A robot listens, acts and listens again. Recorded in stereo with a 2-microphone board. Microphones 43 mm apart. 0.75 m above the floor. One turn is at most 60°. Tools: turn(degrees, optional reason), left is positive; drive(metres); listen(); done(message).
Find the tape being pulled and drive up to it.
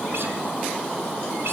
listen()
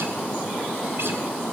listen()
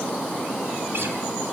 done("I can't make out tape being pulled to turn to.")